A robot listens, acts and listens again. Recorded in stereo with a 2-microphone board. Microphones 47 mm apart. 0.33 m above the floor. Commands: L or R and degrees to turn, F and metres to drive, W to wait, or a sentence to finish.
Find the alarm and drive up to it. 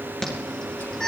L30
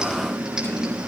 R15
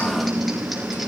F1.0
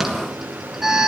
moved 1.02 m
R10
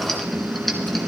F1.0
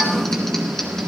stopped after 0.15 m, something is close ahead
Blocked. The alarm is further on, straight ahead.